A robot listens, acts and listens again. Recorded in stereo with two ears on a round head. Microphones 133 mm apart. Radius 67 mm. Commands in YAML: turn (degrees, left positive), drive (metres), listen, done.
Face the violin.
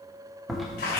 listen: true
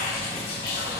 listen: true
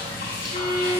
turn: 55
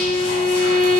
done: "Found it: a violin, straight ahead, 2 to 4 m away."